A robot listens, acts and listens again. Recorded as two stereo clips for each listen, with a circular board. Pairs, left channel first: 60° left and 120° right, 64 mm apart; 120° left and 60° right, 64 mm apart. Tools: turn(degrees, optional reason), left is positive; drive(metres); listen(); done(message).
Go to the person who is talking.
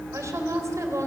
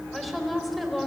turn(degrees=-150, reason="The woman speaking: 150° right.")
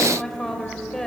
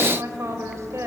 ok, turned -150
turn(degrees=-25, reason="The woman speaking is now 25° right.")
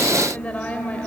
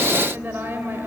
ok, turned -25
drive(metres=1.0)
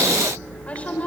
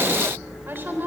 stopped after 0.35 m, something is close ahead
done("Blocked. The woman speaking is further on, straight ahead.")